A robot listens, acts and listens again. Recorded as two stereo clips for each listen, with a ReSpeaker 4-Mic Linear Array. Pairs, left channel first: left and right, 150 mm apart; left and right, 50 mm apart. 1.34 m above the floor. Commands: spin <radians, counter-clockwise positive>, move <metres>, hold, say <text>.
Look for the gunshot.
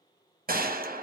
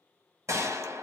spin -1.22
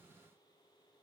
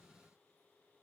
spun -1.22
hold
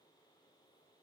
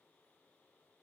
say I heard a gunshot, but can't make it out now. It was about straight ahead or 40° right.